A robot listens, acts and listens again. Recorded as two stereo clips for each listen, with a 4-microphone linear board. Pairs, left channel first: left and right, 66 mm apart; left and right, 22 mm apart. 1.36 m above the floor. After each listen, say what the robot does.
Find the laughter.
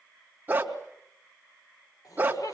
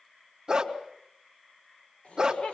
Turn 90° left.
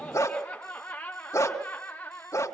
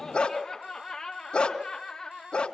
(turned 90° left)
Turn 25° left.
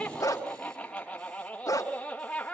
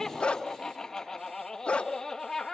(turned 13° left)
Turn 15° left.
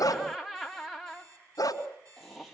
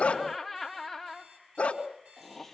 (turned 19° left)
Facing the laughter, 2 to 4 m away.